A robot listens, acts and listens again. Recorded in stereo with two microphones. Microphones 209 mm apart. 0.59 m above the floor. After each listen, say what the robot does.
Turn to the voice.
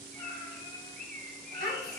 Turn 50° left.
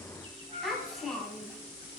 Found it: a child speaking, straight ahead, 2 to 4 m away.